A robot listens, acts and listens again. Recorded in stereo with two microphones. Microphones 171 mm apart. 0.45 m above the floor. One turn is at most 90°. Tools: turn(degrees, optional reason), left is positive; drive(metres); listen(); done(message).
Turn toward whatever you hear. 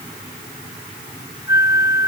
turn(degrees=90)
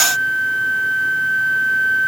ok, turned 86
done("Found it: a flute, straight ahead.")